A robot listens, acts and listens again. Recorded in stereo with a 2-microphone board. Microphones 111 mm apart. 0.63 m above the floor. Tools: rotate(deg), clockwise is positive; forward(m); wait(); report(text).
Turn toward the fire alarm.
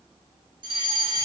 rotate(45)
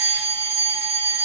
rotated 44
rotate(85)
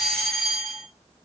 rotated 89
report("Found it: a fire alarm, straight ahead, 2 to 4 m away.")